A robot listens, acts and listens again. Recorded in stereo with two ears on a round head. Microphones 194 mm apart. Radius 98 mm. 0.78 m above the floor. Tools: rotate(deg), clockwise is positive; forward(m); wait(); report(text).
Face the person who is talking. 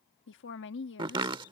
rotate(-60)
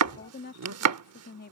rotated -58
rotate(-50)
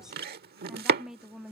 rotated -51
report("Facing the woman speaking.")